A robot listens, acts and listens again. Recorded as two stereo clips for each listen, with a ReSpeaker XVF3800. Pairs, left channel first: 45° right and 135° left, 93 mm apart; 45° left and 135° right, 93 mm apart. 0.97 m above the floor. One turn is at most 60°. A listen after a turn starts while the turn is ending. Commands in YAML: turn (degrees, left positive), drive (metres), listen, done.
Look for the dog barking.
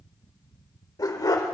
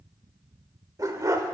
turn: -60
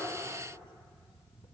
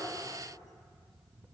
turn: -30
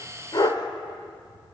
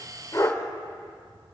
done: "Facing the dog barking, 1 to 2 m away."